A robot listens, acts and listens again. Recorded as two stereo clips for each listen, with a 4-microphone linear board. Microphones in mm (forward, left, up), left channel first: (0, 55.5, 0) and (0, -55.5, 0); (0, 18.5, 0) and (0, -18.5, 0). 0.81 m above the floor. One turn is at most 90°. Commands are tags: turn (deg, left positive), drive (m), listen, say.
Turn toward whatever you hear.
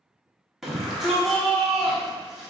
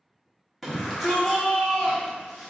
<turn deg="30"/>
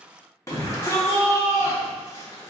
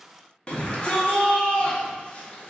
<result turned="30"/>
<turn deg="90"/>
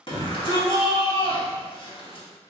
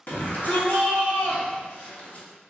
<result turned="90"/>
<turn deg="55"/>
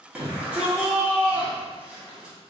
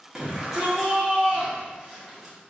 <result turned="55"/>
<turn deg="-10"/>
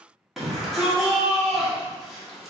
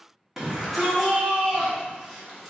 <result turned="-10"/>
<say>Facing the shout.</say>